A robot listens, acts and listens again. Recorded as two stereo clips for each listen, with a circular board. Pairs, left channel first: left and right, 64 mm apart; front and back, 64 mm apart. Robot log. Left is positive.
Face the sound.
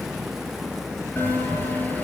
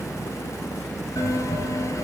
note: The bell: 30° left.
cmd yaw +30
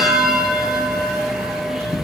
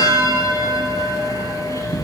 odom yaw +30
end: Found it: a bell, straight ahead, over 4 m away.